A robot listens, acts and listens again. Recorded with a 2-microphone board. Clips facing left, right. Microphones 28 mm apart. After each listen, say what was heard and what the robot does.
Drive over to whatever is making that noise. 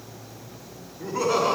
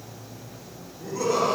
The laughter: about 25° left or 155° left. Turn 25° left.
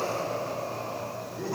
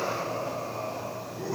Drive 1.0 m forward.
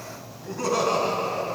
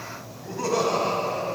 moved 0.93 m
Drive 1.0 m forward.
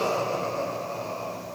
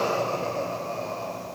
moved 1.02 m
Drive 1.0 m forward.
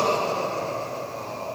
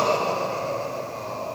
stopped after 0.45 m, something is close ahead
The laughter is now 10° right. Turn 10° right.
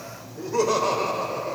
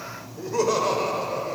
I am next to the laughter.